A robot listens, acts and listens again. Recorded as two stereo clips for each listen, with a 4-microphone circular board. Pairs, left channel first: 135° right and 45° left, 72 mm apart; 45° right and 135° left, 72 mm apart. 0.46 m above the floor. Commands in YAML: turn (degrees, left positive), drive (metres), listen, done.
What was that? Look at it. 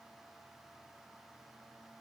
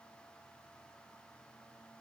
listen: true
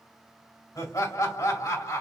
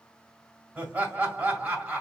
turn: -155
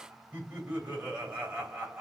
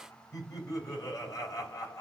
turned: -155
turn: -15
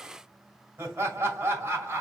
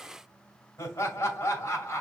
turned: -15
done: "Facing the laughter."